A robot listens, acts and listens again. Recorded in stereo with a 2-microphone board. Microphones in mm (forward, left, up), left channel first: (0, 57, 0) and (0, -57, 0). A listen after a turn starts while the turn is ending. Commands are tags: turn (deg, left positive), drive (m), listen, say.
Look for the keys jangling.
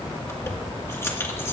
<turn deg="25"/>
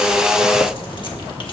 <listen/>
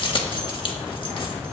<turn deg="130"/>
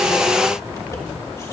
<turn deg="30"/>
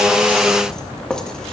<say>Found it: keys jangling, straight ahead, 1 to 2 m away.</say>